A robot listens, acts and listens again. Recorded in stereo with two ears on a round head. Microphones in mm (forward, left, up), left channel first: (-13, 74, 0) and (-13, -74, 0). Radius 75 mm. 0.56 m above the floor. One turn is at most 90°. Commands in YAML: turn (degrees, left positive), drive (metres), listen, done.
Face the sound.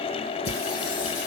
turn: 90
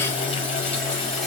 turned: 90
done: "Facing the singing."